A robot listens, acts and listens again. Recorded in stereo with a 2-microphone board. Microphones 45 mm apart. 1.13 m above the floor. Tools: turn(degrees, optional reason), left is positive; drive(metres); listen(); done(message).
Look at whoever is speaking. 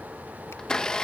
listen()
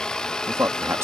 turn(degrees=-70, reason="The man speaking: about 70° right or 110° right.")
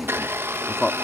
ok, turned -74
done("Found it: a man speaking, straight ahead.")